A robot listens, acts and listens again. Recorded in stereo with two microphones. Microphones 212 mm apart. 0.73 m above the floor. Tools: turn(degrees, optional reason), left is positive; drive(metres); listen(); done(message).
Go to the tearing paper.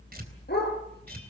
turn(degrees=-50, reason="The tearing paper: about 50° right or 130° right.")
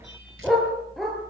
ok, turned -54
listen()
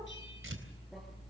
turn(degrees=-80, reason="So it is at 80° right.")
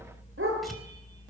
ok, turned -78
listen()
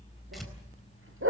listen()
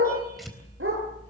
drive(metres=1.0)
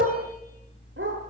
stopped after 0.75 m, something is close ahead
listen()
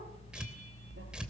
done("Something is in my way. I am facing the tearing paper but have not reached it.")